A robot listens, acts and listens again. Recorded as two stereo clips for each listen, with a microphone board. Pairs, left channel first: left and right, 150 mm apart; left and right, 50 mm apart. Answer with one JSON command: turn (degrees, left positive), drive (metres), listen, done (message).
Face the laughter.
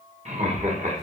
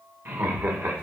{"turn": -55}
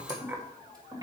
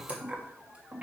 {"turn": -15}
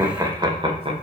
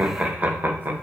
{"turn": -40}
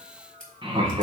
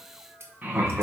{"turn": -40}
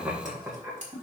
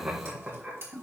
{"turn": -15}
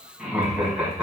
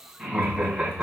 {"done": "Found it: laughter, straight ahead."}